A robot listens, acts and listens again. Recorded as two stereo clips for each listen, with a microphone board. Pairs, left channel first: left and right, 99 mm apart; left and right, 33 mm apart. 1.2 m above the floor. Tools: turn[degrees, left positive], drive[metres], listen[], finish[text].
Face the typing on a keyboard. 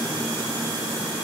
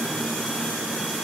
Action: listen[]
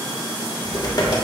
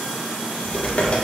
Thought: The typing on a keyboard: about 40° left or 140° left.
Action: turn[40]
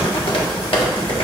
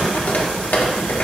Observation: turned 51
Thought: So it is at 85° left.
Action: turn[85]
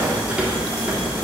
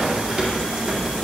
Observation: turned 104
Thought: The typing on a keyboard is now 15° right.
Action: turn[-15]
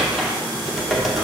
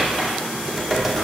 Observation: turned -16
Action: finish[Facing the typing on a keyboard, 1 to 2 m away.]